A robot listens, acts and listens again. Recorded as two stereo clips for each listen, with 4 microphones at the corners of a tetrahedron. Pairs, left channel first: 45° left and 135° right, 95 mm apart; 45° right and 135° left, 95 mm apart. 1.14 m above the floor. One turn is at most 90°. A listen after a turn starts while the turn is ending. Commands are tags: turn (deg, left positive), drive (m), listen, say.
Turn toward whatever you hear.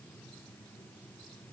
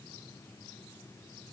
<listen/>
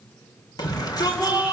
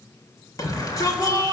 <say>Facing the shout, 2 to 4 m away.</say>